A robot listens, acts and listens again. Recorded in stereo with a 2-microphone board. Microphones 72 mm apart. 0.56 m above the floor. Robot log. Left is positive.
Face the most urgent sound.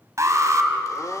note: The alarm: about 45° right or 135° right.
cmd yaw -45
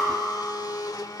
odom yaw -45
end: Facing the alarm, 2 to 4 m away.